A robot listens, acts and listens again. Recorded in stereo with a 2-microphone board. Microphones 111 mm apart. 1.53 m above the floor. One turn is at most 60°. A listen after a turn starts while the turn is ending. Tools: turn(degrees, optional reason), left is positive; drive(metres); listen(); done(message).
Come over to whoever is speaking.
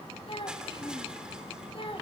turn(degrees=50, reason="The child speaking: about 50° left or 130° left.")
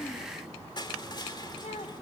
turn(degrees=60, reason="So it is at 75° left.")
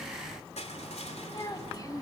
turn(degrees=35, reason="The child speaking is now 35° left.")
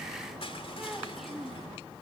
drive(metres=1.0)
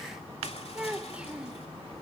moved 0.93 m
turn(degrees=-10, reason="The child speaking is now 10° right.")
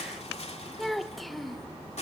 drive(metres=1.0)
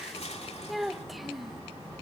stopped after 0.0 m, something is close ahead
done("I am next to the child speaking.")